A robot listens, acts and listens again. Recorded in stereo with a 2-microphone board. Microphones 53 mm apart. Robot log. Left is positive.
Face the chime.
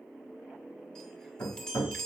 cmd yaw +30
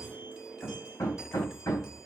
cmd idle
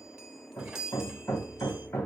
note: So it is at 15° right.
cmd yaw -15
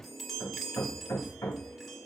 end: Found it: a chime, straight ahead.